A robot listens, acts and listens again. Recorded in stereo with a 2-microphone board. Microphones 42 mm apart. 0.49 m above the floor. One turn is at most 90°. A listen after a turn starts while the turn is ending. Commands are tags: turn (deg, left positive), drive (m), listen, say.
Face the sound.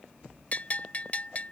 <turn deg="40"/>
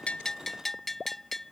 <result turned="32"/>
<turn deg="10"/>
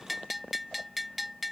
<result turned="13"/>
<say>Facing the bell.</say>